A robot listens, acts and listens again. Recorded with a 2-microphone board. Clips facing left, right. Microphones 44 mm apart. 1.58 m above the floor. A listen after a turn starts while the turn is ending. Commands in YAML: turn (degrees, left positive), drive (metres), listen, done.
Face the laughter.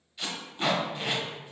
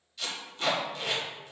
listen: true
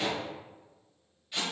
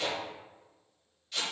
listen: true
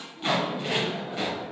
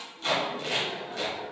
turn: 55
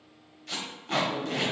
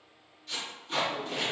turn: 65
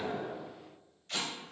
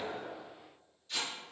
listen: true
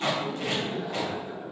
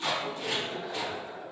turn: 20
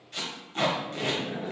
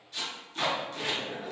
done: "Found it: laughter, straight ahead, 1 to 2 m away."